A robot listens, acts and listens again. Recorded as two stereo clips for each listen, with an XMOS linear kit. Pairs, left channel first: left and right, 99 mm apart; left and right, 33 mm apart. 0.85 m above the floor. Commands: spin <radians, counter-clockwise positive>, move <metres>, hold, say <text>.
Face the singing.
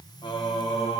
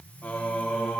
spin 1.22
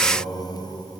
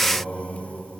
spin 0.52
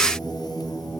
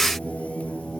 say Found it: singing, straight ahead.